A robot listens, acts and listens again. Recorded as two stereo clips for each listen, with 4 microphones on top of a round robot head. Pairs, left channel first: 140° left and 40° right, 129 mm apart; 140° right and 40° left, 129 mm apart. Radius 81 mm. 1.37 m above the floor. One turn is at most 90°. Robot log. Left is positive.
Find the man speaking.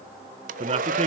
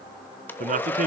end: Found it: a man speaking, straight ahead, 1 to 2 m away.